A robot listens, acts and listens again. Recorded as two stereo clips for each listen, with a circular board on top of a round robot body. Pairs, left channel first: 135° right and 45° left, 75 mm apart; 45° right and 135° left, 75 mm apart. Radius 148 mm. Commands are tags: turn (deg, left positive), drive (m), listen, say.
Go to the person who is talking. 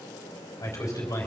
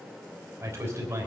<turn deg="-175"/>
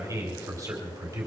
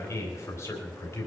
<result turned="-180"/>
<drive m="1.0"/>
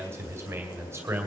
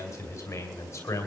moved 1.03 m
<drive m="1.0"/>
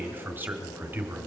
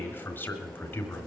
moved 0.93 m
<drive m="1.0"/>
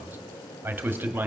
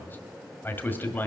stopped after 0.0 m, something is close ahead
<say>Arrived at the man speaking, straight ahead.</say>